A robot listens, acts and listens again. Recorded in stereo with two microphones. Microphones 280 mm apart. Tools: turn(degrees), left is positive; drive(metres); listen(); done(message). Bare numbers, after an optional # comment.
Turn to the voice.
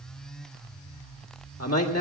# The man speaking: about 55° left or 125° left.
turn(55)
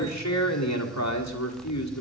# So it is at 70° left.
turn(70)
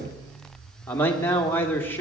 done("Found it: a man speaking, straight ahead.")